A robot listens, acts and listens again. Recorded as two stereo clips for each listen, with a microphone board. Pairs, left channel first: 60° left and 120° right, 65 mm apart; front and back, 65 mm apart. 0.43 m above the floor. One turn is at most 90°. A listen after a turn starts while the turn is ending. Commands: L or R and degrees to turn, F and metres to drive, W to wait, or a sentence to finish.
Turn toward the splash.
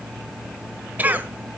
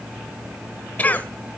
W
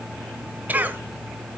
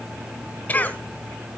W
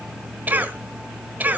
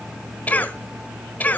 I can't make out a splash, only a cough.